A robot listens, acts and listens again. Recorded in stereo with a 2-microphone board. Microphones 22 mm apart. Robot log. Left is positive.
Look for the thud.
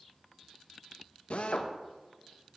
cmd idle
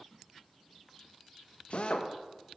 cmd idle
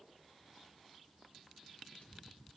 end: I can't make out a thud, only a drill.